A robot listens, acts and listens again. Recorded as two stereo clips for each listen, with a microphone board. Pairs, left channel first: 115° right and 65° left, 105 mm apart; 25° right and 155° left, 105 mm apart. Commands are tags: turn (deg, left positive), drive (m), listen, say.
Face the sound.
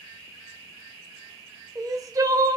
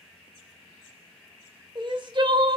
<turn deg="120"/>
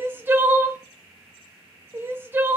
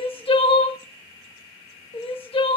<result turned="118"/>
<say>Facing the crying, under 1 m away.</say>